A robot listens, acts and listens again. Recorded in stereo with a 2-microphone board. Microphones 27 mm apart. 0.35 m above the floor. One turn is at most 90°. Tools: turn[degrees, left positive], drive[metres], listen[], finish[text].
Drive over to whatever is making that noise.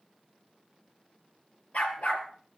Thought: The dog barking: about 65° left or 115° left.
Action: turn[65]
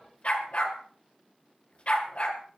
Thought: So it is at 50° left.
Action: turn[50]
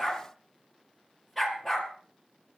Action: drive[1.0]
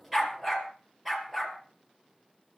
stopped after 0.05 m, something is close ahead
Action: finish[Something is in my way. I am facing the dog barking but have not reached it.]